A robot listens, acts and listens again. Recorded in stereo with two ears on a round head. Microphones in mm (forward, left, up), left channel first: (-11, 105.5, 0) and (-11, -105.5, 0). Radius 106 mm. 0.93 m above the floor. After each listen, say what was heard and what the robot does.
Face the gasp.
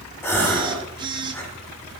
Turn 30° left.
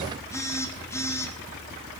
Keep listening.
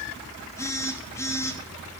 I heard a gasp, but can't make it out now. It was about 20° right or 140° left.